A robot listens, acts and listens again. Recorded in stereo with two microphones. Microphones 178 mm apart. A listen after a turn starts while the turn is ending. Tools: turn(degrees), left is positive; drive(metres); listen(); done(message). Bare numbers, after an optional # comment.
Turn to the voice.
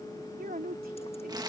# The woman speaking: about 60° right or 120° right.
turn(-60)
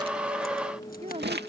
# So it is at 40° right.
turn(-40)
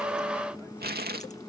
listen()
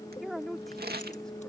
done("Found it: a woman speaking, straight ahead.")